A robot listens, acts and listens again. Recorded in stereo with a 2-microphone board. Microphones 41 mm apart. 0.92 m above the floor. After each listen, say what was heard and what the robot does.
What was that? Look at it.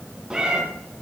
The cat meowing: about 20° right or 160° right. Turn 20° right.
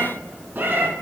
So it is at 125° right. Turn 125° right.
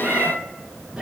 The cat meowing is now 20° right. Turn 20° right.
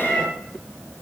The cat meowing is now 10° left. Turn 10° left.
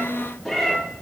Found it: a cat meowing, straight ahead, 2 to 4 m away.